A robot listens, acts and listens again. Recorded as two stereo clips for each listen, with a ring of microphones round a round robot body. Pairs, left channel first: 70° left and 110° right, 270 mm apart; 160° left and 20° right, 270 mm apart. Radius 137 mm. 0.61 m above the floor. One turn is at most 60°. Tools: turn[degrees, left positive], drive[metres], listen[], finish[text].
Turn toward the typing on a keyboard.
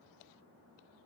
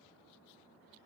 Action: listen[]
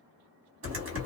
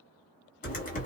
Thought: The typing on a keyboard: 145° right.
Action: turn[-60]
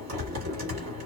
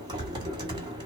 Thought: The typing on a keyboard is now 95° right.
Action: turn[-60]
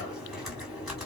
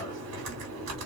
Thought: The typing on a keyboard is now 25° right.
Action: turn[-25]
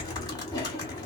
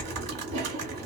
Action: finish[Facing the typing on a keyboard.]